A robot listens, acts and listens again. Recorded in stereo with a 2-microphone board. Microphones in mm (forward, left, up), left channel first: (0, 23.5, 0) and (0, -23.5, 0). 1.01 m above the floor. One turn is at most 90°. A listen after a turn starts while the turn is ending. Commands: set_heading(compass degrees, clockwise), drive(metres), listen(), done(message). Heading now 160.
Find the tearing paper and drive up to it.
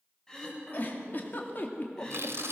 set_heading(230)
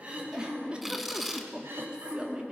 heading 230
drive(1.0)
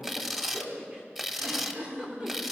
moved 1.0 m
set_heading(240)
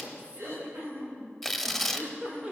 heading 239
drive(1.0)
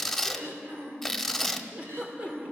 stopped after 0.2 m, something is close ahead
done("Arrived at the tearing paper, straight ahead.")